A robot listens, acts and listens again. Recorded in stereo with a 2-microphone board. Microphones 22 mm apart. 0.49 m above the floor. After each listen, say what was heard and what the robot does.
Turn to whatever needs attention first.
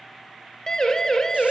The siren: about 25° left or 155° left. Turn 25° left.
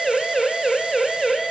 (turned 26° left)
Facing the siren, 2 to 4 m away.